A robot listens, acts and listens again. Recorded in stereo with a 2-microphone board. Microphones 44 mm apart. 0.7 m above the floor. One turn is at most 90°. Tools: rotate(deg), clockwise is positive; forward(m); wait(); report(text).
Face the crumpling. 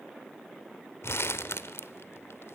rotate(-70)
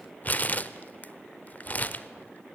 rotate(-40)
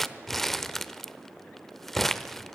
report("Facing the crumpling, under 1 m away.")